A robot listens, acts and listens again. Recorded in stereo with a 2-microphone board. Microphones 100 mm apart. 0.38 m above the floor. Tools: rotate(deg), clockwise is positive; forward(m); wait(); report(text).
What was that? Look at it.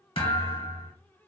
rotate(-70)
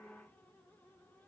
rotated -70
wait()
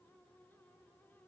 report("I heard a thud, but can't make it out now. It was about straight ahead or 40° left.")